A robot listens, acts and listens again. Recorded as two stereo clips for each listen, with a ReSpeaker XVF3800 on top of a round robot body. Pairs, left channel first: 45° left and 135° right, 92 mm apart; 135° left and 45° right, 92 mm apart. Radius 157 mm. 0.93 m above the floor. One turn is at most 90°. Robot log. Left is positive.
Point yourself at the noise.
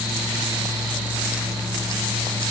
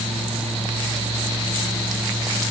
cmd idle
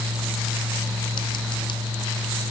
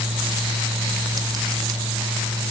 cmd idle
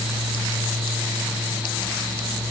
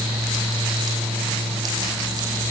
end: I can't make out anything.